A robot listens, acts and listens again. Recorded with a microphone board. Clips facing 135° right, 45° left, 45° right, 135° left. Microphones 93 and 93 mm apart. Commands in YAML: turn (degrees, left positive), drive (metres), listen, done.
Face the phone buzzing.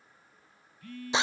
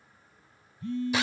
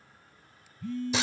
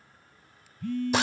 turn: 110
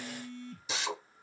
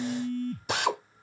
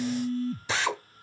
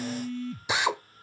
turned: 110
turn: 10
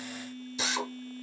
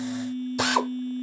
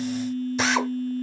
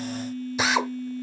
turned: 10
done: "Found it: a phone buzzing, straight ahead."